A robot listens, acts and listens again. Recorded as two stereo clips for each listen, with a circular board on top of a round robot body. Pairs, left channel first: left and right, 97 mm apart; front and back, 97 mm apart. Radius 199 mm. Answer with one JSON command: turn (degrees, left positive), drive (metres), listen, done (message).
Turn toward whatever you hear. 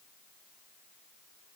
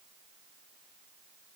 {"listen": true}
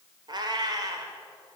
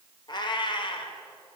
{"turn": -35}
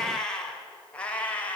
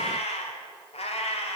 {"turn": 15}
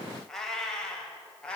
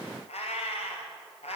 {"turn": 10}
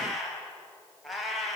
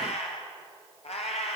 {"done": "Found it: a cat meowing, straight ahead, 2 to 4 m away."}